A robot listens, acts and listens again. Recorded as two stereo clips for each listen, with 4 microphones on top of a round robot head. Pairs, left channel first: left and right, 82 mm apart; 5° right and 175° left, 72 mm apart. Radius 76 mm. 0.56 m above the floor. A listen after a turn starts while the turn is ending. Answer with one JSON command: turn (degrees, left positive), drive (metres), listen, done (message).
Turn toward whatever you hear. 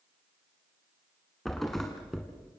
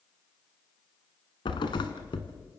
{"done": "Facing the thud, 1 to 2 m away."}